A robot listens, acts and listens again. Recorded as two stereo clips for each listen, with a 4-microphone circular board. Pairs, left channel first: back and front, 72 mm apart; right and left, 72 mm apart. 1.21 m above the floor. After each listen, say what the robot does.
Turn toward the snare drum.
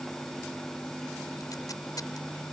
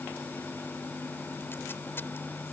Keep listening.
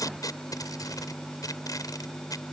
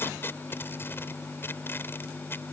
Keep listening.
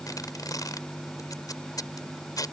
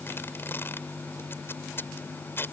I can't make out a snare drum to turn to.